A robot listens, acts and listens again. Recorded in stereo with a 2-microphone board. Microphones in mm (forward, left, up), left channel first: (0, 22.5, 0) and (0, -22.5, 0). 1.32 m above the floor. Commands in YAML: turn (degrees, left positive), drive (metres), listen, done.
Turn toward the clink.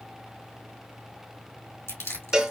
listen: true
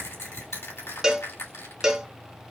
listen: true
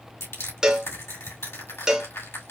done: "I can't make out a clink, only a cowbell and crushing."